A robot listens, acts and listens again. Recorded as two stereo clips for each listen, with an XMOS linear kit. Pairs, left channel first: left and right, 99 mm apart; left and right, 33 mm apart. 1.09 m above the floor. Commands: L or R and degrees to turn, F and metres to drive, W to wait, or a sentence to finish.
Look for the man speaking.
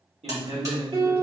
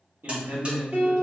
R75
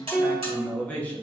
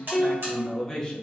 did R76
L20
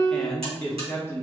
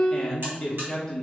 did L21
L25
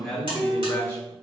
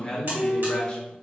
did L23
L20
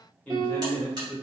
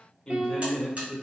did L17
L20
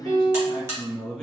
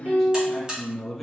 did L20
Facing the man speaking.